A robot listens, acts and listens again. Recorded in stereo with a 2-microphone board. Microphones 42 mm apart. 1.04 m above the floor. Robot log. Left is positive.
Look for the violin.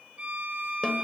note: The violin: about 35° right or 145° right.
cmd yaw -35
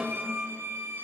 note: So it is at 105° right.
cmd yaw -105
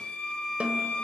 note: The violin is now 30° left.
cmd yaw +30
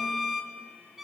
end: Found it: a violin, straight ahead, 1 to 2 m away.